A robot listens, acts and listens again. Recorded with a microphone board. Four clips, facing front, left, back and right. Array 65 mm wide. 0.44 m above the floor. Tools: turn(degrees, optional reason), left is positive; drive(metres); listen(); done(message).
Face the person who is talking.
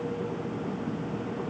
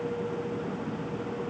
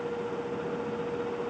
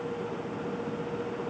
listen()
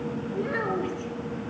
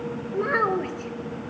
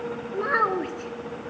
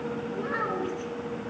turn(degrees=150, reason="The child speaking: 150° left.")
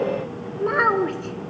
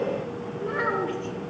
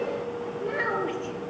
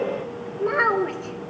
turn(degrees=-25, reason="The child speaking is now 25° right.")
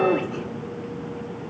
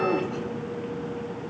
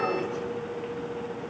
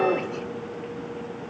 listen()
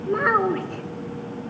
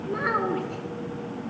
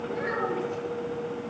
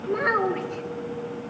done("Found it: a child speaking, straight ahead.")